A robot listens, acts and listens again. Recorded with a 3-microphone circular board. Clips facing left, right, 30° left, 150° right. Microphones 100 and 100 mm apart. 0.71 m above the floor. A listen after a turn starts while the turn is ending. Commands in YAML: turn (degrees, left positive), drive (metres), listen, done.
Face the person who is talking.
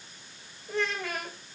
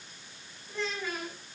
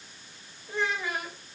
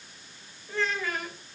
turn: 100
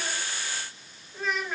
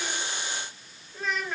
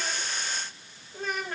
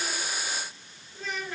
done: "Found it: a child speaking, straight ahead, 2 to 4 m away."